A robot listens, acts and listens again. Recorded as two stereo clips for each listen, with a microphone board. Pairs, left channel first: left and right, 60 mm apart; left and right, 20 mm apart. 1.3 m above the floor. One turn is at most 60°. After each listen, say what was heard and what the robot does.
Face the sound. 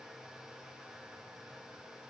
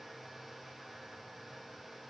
Keep listening.
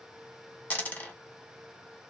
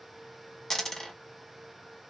The dropped coin: about 30° left or 150° left. Turn 30° left.
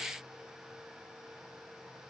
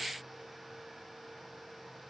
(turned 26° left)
Keep listening.
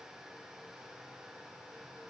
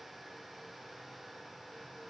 I heard a dropped coin, but can't make it out now. It was about 5° left or 125° left.